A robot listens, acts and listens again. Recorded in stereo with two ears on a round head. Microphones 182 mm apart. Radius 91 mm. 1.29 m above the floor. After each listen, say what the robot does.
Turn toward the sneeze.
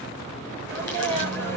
Turn 30° left.
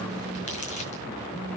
Keep listening.
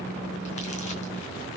I heard a sneeze, but can't make it out now. It was about 20° right or 140° left.